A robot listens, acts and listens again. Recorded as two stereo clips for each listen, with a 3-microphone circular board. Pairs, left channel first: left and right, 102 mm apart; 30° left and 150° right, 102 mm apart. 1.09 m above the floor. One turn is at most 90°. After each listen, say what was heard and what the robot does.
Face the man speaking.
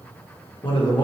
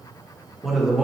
The man speaking: 130° left. Turn 90° left.
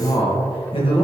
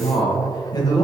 The man speaking is now 75° left. Turn 75° left.
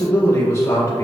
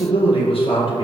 The man speaking is now 35° left. Turn 35° left.
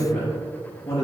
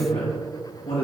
The man speaking is now 30° left. Turn 30° left.
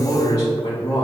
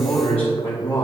The man speaking is now 40° left. Turn 40° left.
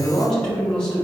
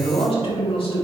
Found it: a man speaking, straight ahead, 2 to 4 m away.